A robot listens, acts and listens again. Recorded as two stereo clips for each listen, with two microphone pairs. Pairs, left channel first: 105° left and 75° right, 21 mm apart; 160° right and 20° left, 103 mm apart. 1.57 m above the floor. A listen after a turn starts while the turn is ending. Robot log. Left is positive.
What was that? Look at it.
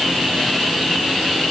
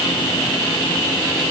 cmd idle
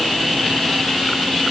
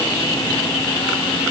cmd idle
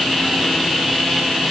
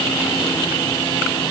end: I can't make out anything to turn to.